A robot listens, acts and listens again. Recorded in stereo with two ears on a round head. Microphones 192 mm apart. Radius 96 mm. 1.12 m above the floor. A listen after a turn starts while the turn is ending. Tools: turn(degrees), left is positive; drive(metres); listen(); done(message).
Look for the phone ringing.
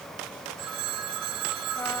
turn(degrees=-90)
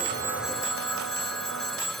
done("Found it: a phone ringing, straight ahead.")